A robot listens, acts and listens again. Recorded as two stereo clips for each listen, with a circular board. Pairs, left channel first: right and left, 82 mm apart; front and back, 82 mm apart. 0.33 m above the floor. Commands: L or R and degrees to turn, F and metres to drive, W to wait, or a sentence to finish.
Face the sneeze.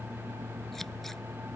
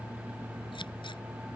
W
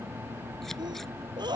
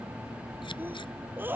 L115
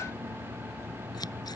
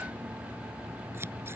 I heard a sneeze from this way, but can't make it out now.